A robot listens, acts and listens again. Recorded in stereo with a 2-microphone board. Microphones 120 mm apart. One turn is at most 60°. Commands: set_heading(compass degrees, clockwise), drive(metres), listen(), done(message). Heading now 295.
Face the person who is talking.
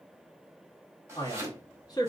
set_heading(265)
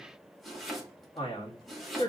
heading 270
set_heading(210)
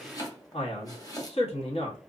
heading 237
set_heading(177)
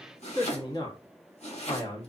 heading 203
set_heading(153)
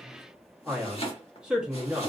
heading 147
done("Facing the man speaking.")